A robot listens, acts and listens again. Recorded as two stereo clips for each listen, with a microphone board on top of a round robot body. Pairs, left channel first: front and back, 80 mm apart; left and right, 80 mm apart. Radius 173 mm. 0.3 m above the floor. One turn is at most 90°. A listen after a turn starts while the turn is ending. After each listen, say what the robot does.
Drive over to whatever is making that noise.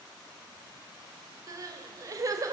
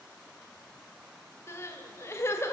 Turn 90° left.
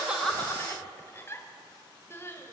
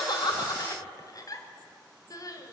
Turn 55° left.
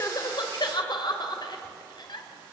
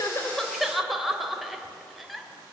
Drive 1.0 m forward.
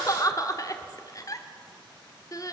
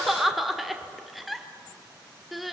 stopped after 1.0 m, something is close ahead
I am next to the crying.